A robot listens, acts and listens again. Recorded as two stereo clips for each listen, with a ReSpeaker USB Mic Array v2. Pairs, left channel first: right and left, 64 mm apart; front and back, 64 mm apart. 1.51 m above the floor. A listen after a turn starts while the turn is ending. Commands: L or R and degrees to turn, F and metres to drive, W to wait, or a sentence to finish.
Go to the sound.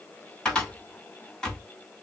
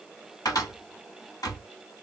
R15
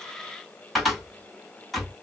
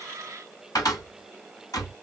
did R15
F1.0
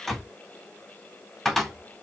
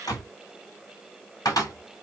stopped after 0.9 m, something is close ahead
I am next to the cupboard door.